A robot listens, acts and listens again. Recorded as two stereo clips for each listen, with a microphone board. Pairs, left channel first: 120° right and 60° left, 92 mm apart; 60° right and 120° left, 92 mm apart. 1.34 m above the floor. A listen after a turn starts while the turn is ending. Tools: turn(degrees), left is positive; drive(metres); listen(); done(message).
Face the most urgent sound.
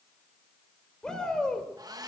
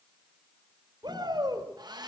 turn(degrees=155)
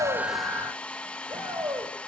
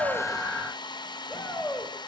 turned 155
turn(degrees=15)
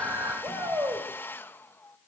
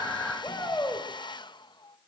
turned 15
done("Facing the shout.")